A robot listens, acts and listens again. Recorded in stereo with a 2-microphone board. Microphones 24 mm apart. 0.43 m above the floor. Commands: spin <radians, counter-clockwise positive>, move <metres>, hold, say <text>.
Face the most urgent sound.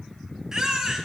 spin -0.44
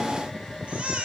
spin -2.27
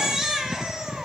spin -0.44
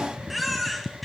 say Facing the baby crying, 2 to 4 m away.